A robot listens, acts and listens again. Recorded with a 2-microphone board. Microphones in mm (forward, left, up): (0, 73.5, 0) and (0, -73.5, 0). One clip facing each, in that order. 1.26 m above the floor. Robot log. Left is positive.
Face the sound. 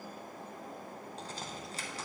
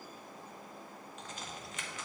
note: The crack: about 35° left or 145° left.
cmd yaw +35
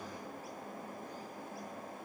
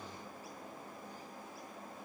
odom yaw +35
cmd idle
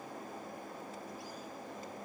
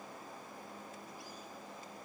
end: I heard a crack, but can't make it out now. It was about straight ahead or 110° left.